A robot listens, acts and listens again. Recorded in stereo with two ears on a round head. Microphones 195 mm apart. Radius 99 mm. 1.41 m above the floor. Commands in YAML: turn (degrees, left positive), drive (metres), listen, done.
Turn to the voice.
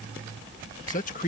turn: 35
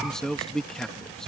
done: "Found it: a man speaking, straight ahead."